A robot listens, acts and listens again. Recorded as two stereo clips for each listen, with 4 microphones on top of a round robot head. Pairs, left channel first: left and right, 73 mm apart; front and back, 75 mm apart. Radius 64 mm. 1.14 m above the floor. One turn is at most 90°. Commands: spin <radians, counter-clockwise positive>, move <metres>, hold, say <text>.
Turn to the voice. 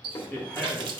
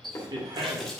spin 1.57
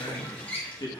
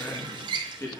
spin 0.96
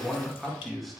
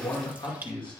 say Found it: a man speaking, straight ahead.